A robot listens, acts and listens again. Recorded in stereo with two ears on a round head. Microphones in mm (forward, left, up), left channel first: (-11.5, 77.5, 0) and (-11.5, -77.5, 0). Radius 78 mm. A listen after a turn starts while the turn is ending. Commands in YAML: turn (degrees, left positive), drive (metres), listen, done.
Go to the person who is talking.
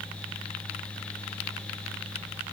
listen: true
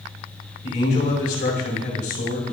turn: 60
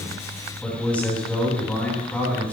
turn: 10
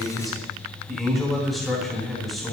drive: 1.0
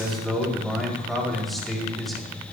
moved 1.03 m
drive: 1.0
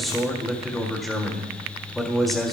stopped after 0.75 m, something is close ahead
done: "Arrived at the man speaking, straight ahead."